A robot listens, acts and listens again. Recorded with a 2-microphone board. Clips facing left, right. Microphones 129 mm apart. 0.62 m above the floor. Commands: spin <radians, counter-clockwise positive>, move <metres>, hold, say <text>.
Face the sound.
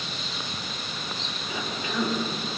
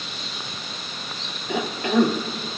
spin -1.13
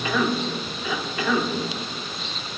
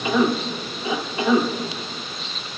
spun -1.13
spin -0.44
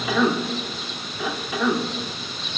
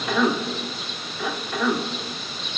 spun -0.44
say Found it: a cough, straight ahead, 1 to 2 m away.